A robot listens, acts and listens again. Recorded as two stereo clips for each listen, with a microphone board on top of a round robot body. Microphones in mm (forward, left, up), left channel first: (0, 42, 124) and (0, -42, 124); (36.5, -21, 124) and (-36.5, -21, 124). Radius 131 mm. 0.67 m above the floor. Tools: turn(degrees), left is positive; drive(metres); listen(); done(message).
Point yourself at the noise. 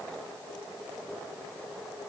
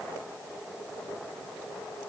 listen()
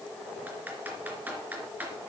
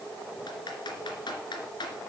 turn(degrees=-20)
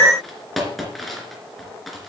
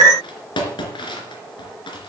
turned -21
done("Found it: typing on a keyboard, straight ahead, 2 to 4 m away.")